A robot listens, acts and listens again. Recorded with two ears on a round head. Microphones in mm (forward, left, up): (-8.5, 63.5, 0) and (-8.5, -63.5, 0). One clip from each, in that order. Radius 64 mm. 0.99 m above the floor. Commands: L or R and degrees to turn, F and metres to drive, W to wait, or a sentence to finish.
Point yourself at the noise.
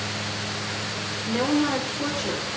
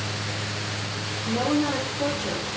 L30
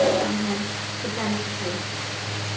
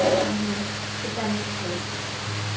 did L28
L120
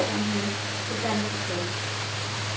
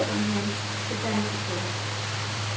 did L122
Found it: a woman speaking, straight ahead, over 4 m away.